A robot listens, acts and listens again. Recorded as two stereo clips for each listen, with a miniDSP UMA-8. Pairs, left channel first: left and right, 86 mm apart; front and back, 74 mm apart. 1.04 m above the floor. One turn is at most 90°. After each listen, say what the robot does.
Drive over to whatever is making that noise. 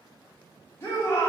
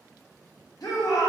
Turn 30° left.
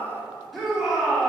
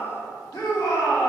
Drive 1.0 m forward.
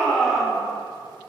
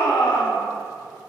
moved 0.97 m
Drive 1.0 m forward.
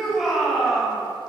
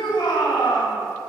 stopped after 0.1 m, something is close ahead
I am next to the shout.